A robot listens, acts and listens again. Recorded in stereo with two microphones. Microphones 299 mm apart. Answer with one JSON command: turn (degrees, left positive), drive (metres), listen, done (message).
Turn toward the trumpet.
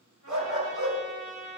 {"turn": 90}
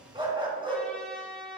{"done": "Facing the trumpet."}